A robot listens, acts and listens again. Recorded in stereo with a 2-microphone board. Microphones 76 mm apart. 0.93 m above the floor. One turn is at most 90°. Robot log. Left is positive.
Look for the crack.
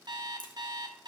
cmd yaw +90
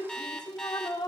end: I heard a crack from this way, but can't make it out now.